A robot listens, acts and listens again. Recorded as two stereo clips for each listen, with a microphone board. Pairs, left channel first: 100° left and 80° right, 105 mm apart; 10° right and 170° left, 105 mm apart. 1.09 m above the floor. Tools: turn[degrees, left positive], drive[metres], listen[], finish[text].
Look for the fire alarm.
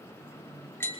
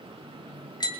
Action: listen[]
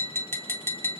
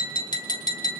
Action: listen[]
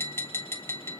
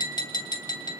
Action: finish[I can't make out a fire alarm to turn to.]